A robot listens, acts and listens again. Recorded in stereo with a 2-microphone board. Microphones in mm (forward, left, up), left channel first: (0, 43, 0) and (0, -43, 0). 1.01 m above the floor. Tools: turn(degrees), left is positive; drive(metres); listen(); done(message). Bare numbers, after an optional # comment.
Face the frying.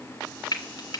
# The frying: about 55° left or 125° left.
turn(55)
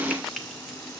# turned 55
listen()
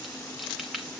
done("Facing the frying, 2 to 4 m away.")